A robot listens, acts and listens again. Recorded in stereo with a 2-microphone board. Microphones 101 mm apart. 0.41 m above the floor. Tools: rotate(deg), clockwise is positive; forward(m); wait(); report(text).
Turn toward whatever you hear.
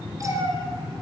rotate(35)
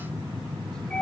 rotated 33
rotate(-10)
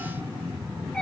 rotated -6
rotate(-10)
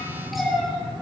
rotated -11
report("Facing the cat meowing, 2 to 4 m away.")